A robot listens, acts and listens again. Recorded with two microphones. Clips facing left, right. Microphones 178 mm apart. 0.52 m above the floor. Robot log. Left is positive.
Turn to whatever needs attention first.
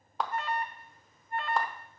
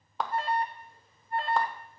note: The alarm: about 30° right or 150° right.
cmd yaw -30
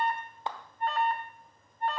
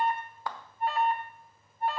end: Found it: an alarm, straight ahead.